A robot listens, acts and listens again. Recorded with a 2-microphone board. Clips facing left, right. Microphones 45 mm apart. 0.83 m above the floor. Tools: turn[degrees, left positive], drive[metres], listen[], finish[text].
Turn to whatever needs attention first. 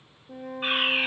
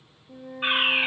Thought: The fire alarm: about 20° right or 160° right.
Action: turn[-20]
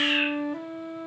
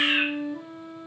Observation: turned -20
Thought: So it is at 140° right.
Action: turn[-140]
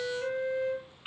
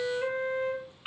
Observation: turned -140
Thought: The fire alarm is now 15° right.
Action: turn[-15]
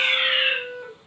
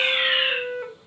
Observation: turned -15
Action: finish[Facing the fire alarm.]